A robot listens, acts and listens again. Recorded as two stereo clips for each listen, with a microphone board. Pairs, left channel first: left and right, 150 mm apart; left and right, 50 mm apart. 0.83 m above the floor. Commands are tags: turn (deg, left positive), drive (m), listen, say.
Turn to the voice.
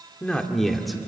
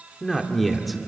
<turn deg="30"/>
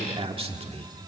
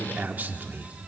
<turn deg="-45"/>
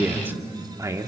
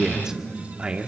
<turn deg="-25"/>
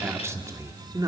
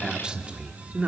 <turn deg="-25"/>
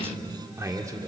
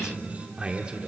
<turn deg="-25"/>
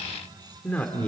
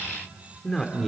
<turn deg="10"/>
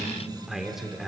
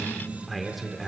<say>Found it: a man speaking, straight ahead.</say>